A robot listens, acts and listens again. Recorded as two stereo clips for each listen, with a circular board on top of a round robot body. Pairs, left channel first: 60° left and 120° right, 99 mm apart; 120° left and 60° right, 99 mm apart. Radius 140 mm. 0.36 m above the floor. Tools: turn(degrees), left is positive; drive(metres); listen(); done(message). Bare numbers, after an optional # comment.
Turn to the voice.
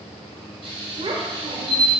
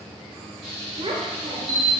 # The child speaking: 90° right.
turn(-90)
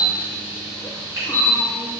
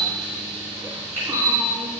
listen()
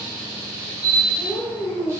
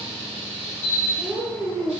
done("Found it: a child speaking, straight ahead, 1 to 2 m away.")